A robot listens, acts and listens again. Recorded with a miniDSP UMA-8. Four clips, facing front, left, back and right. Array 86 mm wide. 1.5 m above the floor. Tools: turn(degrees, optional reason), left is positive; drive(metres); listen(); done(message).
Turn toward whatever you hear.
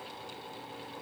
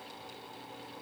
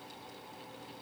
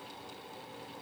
listen()
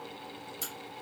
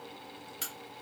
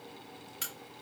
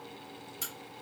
turn(degrees=150, reason="The crack: 150° left.")
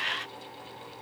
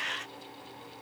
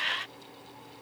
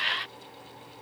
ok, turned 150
done("I heard a crack from this way, but can't make it out now.")